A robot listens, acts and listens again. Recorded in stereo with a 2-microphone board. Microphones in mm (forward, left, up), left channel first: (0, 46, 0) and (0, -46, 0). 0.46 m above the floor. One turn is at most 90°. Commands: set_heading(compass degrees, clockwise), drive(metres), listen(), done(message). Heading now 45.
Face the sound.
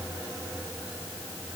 listen()
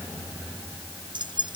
set_heading(105)
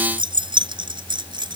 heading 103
set_heading(158)
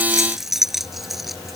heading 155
done("Found it: keys jangling, straight ahead.")